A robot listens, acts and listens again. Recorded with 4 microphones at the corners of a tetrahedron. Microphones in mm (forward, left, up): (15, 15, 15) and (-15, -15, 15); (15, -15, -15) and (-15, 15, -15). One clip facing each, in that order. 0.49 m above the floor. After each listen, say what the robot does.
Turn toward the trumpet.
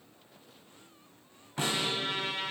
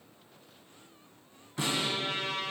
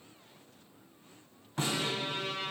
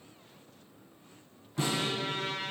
Turn 110° left.
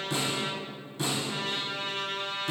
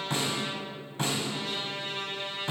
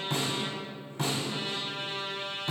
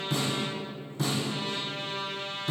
Turn 20° left.
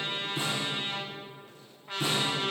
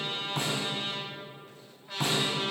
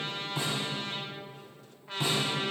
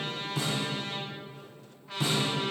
Found it: a trumpet, straight ahead, 1 to 2 m away.